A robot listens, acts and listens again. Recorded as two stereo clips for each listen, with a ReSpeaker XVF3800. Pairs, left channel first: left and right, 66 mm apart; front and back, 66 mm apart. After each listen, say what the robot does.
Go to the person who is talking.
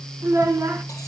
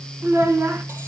Turn 130° right.
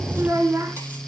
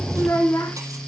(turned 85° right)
Turn 45° right.
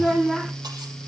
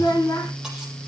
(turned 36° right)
Drive 1.0 m forward.
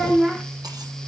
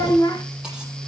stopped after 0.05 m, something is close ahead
Something is in my way. I am facing the child speaking but have not reached it.